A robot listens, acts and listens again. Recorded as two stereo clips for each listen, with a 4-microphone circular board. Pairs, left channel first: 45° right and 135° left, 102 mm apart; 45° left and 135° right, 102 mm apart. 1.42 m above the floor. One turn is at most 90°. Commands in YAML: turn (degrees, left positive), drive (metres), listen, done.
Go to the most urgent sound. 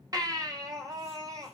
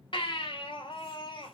turn: 80
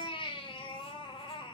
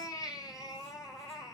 drive: 1.0
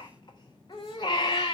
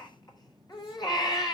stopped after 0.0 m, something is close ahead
done: "Something is in my way. I am facing the baby crying but have not reached it."